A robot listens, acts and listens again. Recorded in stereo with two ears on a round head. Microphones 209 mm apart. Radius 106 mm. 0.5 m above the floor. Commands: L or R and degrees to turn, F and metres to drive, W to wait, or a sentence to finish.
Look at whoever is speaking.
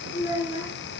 L45
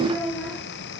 Found it: a child speaking, straight ahead.